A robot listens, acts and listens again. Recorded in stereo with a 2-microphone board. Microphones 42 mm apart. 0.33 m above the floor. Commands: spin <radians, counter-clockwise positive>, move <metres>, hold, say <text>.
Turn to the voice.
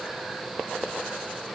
hold
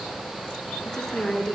spin 0.52
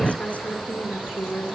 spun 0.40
spin 2.53
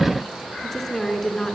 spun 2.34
spin 0.17
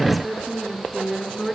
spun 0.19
say Facing the woman speaking.